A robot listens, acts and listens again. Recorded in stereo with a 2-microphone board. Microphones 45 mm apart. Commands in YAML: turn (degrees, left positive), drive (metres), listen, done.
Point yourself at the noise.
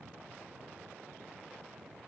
listen: true
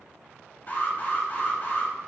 turn: 40
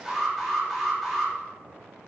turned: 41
done: "Found it: an alarm, straight ahead."